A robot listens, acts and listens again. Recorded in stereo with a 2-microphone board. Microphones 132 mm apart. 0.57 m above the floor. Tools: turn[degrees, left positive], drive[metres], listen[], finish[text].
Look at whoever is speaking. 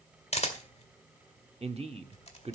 Thought: The man speaking: about 50° right or 130° right.
Action: turn[-50]
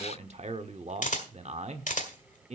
Thought: So it is at 70° right.
Action: turn[-70]
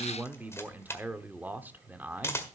Thought: The man speaking is now 15° right.
Action: turn[-15]
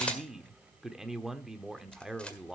Action: finish[Found it: a man speaking, straight ahead.]